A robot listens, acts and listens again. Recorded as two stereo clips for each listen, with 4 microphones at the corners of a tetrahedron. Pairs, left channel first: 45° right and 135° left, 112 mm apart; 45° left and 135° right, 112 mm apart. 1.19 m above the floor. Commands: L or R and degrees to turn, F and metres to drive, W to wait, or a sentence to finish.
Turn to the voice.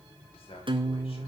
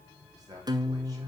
R80
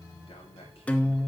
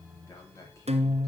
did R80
R15
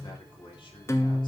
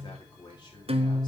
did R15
Facing the man speaking.